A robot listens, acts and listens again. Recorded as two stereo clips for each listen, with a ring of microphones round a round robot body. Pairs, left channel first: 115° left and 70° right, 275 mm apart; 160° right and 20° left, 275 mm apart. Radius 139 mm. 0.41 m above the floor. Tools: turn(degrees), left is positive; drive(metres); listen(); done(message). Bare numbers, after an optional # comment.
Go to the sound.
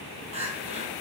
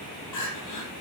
# The crying: 135° right.
turn(-135)
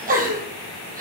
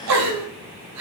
drive(1.0)
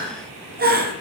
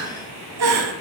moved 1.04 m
# The crying is now 10° right.
turn(-10)
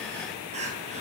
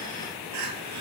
drive(1.0)
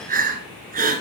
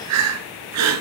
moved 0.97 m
drive(1.0)
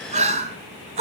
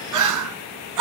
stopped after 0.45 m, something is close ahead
done("Arrived at the crying, straight ahead.")